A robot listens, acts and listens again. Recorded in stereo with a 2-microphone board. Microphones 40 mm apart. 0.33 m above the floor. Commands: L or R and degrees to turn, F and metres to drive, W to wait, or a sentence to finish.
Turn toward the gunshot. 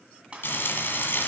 R30
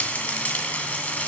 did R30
W
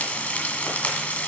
I heard a gunshot, but can't make it out now. It was about straight ahead or 120° right.